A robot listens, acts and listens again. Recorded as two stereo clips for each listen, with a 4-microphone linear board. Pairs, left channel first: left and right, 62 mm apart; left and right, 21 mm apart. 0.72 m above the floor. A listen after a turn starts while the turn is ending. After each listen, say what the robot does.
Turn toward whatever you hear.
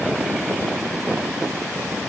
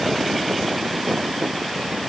Keep listening.
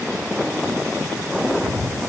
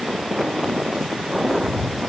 Turn 30° left.
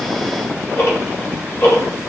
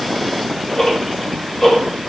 Turn 135° left.
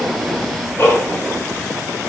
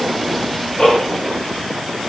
Turn 45° left.
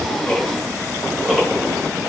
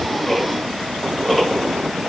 Found it: ticking, straight ahead.